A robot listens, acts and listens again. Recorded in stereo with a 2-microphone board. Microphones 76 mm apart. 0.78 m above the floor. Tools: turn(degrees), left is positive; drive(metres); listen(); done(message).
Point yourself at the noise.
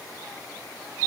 listen()
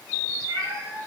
turn(degrees=-90)
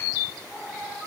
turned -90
done("Facing the cat meowing, over 4 m away.")